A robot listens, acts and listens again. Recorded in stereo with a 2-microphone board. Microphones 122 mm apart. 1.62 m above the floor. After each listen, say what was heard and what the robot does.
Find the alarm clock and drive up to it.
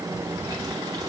Keep listening.
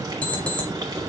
Turn 30° left.
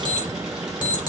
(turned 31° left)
So it is at 140° left. Turn 140° left.
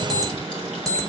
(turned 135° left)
Drive 1.0 m forward.
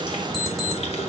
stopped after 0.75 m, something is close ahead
Blocked. The alarm clock is further on, straight ahead.